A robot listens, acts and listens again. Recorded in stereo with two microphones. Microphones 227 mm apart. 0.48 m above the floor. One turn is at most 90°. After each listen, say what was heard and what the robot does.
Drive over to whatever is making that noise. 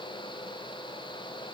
Keep listening.
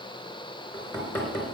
Turn 30° left.
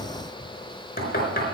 So it is at 140° left. Turn 90° left.
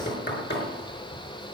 The knocking is now 50° left. Turn 50° left.
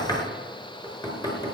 The knocking is now 15° left. Turn 15° left.
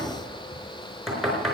Drive 1.0 m forward.
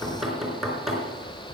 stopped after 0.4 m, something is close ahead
Blocked. The knocking is further on, straight ahead.